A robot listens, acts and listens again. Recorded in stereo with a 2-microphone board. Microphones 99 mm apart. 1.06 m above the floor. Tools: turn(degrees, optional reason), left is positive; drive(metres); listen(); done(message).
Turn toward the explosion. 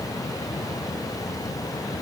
listen()
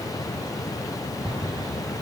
turn(degrees=-60, reason="The explosion: about 60° right or 120° right.")
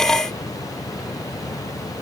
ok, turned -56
listen()
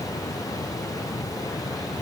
done("I heard an explosion, but can't make it out now. It was about 5° right or 65° right.")